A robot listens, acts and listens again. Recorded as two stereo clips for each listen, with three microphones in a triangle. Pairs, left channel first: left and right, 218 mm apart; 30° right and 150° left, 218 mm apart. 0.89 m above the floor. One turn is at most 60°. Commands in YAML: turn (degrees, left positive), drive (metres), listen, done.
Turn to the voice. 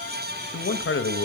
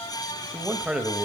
turn: 60
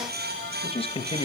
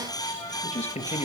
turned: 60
turn: 25
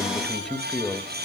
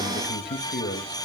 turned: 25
done: "Facing the man speaking, under 1 m away."